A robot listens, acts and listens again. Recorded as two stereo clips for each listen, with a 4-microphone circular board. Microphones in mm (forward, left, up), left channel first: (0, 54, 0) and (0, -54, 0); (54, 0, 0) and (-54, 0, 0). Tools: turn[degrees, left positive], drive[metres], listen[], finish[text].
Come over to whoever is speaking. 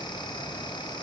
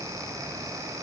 Action: listen[]
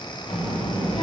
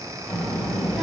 Thought: The child speaking: 90° left.
Action: turn[90]
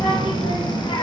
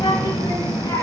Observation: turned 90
Thought: The child speaking is now 50° left.
Action: turn[50]
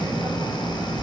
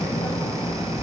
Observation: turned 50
Action: drive[1.0]
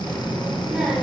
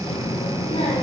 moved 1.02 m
Action: drive[1.0]
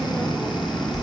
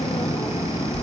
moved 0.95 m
Action: drive[1.0]
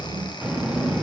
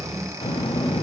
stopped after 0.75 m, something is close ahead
Thought: The child speaking is now 15° right.
Action: turn[-15]
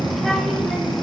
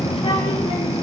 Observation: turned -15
Action: finish[Arrived at the child speaking, straight ahead.]